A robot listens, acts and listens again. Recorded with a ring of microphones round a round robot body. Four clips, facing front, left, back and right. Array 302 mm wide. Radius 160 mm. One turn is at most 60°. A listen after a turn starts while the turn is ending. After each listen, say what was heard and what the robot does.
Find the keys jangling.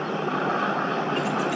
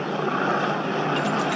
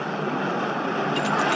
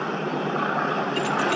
The keys jangling: 170° left. Turn 60° left.
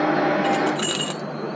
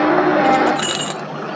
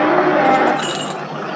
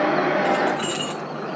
The keys jangling is now 90° left. Turn 60° left.
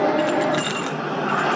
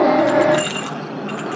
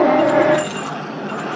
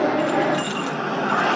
The keys jangling is now 35° left. Turn 35° left.
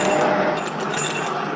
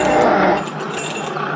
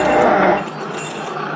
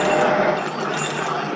The keys jangling is now 10° right. Turn 10° right.
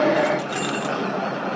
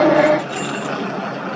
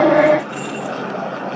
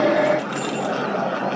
Facing the keys jangling.